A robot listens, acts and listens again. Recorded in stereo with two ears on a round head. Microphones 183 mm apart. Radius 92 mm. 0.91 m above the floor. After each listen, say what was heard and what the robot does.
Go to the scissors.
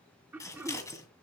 The scissors: about 15° left or 165° left. Turn 15° left.
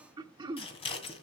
So it is at 150° left. Turn 150° left.
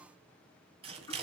The scissors is now 30° right. Turn 30° right.
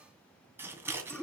The scissors is now 10° right. Turn 10° right.
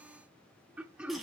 Drive 1.0 m forward.
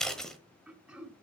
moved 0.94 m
Drive 1.0 m forward.
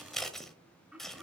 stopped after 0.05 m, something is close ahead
Arrived at the scissors, straight ahead.